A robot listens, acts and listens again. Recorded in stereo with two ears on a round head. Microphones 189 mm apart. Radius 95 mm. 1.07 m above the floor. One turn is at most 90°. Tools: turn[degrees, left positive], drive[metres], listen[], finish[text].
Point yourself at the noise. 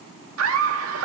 Action: turn[-90]
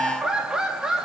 Action: finish[Facing the laughter.]